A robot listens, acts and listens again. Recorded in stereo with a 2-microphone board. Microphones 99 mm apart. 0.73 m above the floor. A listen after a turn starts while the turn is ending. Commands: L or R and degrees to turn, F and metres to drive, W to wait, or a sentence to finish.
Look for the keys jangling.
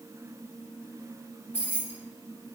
L20
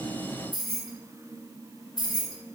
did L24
L135
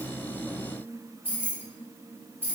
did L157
R20
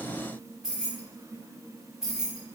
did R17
Found it: keys jangling, straight ahead, 1 to 2 m away.